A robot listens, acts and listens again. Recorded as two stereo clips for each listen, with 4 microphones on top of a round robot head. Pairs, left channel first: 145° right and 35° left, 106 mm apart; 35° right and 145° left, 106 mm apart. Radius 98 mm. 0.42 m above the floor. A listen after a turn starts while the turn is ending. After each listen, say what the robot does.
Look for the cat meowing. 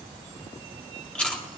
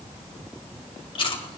Keep listening.
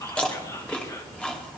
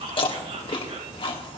Keep listening.
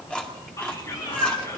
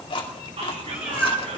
Turn 135° right.
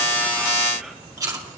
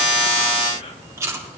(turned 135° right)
Keep listening.
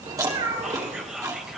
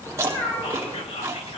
Turn 35° left.
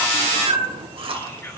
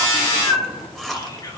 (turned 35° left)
Found it: a cat meowing, straight ahead, 2 to 4 m away.